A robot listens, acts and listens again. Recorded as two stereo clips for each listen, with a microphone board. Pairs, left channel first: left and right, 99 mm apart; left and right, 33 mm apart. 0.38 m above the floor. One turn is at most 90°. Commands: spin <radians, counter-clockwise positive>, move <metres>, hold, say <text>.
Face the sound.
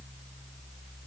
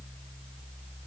hold
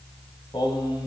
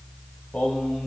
spin 0.87
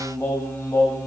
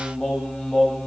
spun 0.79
spin 0.52
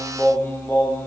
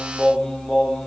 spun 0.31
spin 0.44
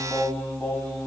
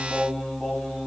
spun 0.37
spin 0.35
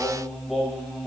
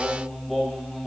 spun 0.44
say Facing the singing.